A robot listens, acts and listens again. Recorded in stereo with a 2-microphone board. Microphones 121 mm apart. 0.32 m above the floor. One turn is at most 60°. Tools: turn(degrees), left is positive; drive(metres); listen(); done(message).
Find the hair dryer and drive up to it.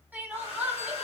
turn(degrees=55)
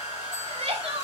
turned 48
turn(degrees=60)
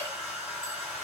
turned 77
turn(degrees=-10)
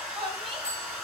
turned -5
drive(metres=1.0)
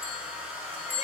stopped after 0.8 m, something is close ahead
turn(degrees=-15)
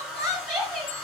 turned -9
done("I am next to the hair dryer.")